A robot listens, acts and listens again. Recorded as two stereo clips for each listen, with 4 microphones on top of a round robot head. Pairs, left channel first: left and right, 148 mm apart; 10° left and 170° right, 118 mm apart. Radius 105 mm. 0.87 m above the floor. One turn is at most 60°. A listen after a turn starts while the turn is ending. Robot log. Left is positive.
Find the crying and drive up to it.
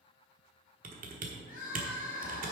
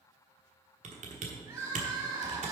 note: The crying: 130° left.
cmd yaw +60
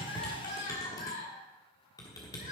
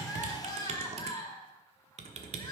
note: The crying is now 60° left.
cmd yaw +60
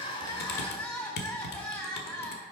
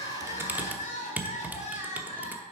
note: The crying is now 15° left.
cmd yaw +15
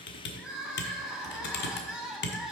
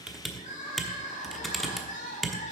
cmd fwd 1.0
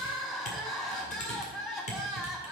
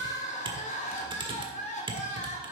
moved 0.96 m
cmd fwd 1.0
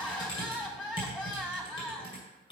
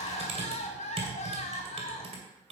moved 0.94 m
cmd fwd 1.0
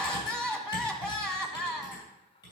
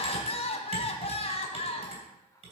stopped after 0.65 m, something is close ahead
end: Arrived at the crying, straight ahead.